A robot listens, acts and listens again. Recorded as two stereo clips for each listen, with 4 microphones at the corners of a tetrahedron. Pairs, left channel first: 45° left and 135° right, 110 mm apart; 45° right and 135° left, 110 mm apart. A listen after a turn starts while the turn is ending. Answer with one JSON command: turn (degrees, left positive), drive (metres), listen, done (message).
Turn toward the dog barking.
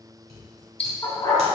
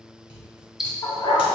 {"done": "Found it: a dog barking, straight ahead."}